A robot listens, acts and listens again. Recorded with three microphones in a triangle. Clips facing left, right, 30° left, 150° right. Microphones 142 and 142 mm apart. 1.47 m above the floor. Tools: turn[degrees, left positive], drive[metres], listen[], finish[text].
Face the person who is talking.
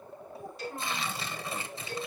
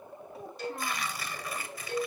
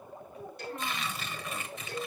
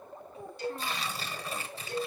Thought: The child speaking: 90° right.
Action: turn[-90]
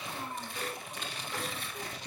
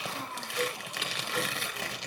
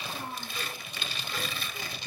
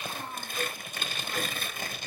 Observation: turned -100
Thought: Nothing new. It was at 10° left.
Action: turn[10]
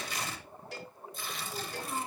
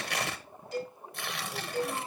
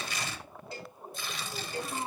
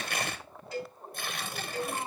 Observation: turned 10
Action: finish[Facing the child speaking.]